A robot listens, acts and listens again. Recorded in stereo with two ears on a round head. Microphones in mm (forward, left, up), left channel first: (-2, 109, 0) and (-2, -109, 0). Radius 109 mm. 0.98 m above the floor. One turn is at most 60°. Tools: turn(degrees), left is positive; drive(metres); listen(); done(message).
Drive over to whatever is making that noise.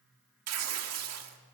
turn(degrees=-60)
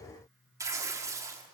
turn(degrees=-15)
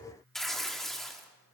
drive(metres=1.0)
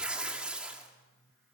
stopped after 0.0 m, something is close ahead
done("Blocked. The tearing paper is further on, straight ahead.")